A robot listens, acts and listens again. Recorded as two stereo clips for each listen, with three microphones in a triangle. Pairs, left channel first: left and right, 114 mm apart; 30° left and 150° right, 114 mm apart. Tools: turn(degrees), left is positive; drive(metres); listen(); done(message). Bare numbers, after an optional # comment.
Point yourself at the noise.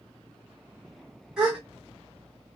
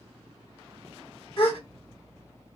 done("Found it: a gasp, straight ahead, 1 to 2 m away.")